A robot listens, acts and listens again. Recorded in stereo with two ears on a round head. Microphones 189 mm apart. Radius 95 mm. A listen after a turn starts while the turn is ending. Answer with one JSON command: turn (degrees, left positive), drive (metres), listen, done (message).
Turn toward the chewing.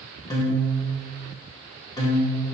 {"listen": true}
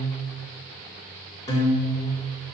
{"listen": true}
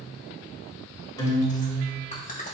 {"turn": 40}
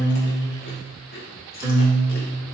{"turn": 95}
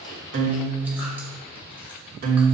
{"listen": true}
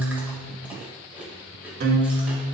{"listen": true}
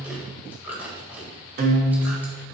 {"turn": -10}
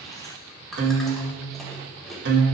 {"done": "Found it: chewing, straight ahead."}